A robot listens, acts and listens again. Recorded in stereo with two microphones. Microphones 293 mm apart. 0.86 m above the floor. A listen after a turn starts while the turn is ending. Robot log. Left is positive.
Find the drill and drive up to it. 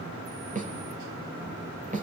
cmd idle
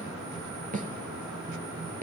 cmd idle
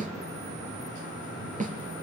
end: I can't make out a drill to turn to.